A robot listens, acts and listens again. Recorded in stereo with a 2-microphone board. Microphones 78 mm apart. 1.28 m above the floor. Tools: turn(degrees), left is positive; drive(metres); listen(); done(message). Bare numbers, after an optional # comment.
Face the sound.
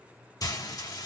# The frying: about 55° left or 125° left.
turn(55)
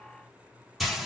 done("Found it: frying, straight ahead.")